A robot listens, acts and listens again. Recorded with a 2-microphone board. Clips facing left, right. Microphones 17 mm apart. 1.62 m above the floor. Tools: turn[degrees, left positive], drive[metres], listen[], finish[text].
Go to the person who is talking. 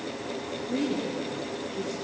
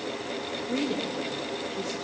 Thought: The woman speaking: about 50° right or 130° right.
Action: turn[-50]
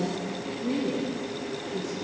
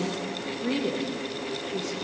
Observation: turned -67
Thought: So it is at 60° right.
Action: turn[-60]
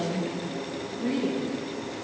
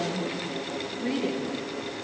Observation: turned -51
Thought: The woman speaking is now 10° right.
Action: turn[-10]
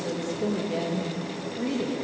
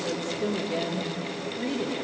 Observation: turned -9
Action: drive[1.0]
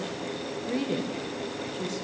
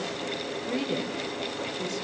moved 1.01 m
Action: drive[1.0]
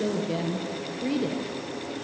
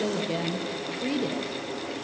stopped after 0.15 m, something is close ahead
Action: finish[I am next to the woman speaking.]